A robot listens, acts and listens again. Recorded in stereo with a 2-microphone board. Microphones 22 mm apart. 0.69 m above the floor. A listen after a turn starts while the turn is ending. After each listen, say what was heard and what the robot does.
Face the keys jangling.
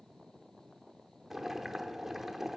Keep listening.
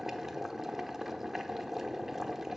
Keep listening.
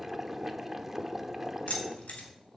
Turn 90° left.
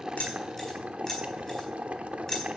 So it is at 15° left. Turn 15° left.
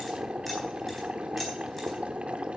Keep listening.
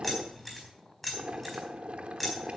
Facing the keys jangling.